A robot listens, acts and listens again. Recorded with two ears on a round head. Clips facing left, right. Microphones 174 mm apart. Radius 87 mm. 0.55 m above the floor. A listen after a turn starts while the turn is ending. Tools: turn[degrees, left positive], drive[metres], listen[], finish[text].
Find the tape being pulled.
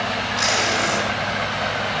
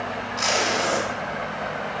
Thought: The tape being pulled: about 25° left or 155° left.
Action: turn[25]
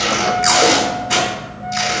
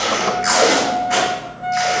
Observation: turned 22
Thought: So it is at 130° left.
Action: turn[130]
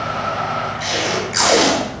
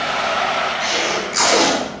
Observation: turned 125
Action: finish[Found it: tape being pulled, straight ahead, 2 to 4 m away.]